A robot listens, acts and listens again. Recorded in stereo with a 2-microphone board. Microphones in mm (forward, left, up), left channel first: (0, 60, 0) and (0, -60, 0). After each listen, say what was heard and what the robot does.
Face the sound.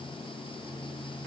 Keep listening.
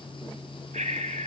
Turn 90° right.
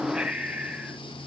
So it is at 10° right. Turn 10° right.
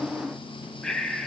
Found it: breathing, straight ahead.